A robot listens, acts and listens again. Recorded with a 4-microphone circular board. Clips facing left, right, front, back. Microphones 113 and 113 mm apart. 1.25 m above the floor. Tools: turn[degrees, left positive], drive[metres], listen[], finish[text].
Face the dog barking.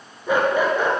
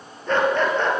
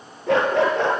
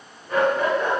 Thought: The dog barking: 10° left.
Action: turn[10]
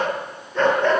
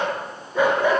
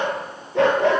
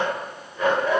Thought: The dog barking is now 10° right.
Action: turn[-10]
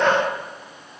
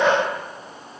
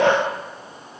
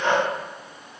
Action: finish[Facing the dog barking, over 4 m away.]